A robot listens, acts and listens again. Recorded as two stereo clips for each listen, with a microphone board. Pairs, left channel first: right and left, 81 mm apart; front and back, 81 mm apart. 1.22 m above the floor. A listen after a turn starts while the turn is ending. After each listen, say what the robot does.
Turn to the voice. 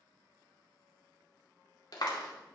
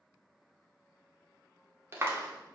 Keep listening.
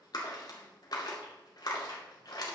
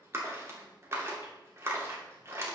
Keep listening.
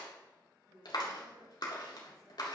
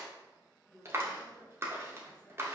Turn 85° left.
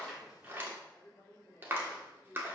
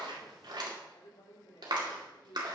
Turn 15° right.
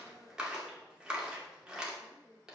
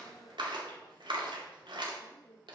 Found it: a woman speaking, straight ahead.